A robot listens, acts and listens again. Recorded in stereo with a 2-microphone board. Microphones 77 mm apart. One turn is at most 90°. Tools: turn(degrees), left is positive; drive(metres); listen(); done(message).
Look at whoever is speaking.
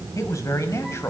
turn(degrees=40)
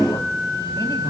listen()
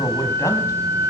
turn(degrees=90)
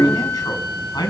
turn(degrees=70)
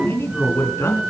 turn(degrees=35)
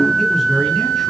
done("Found it: a man speaking, straight ahead, over 4 m away.")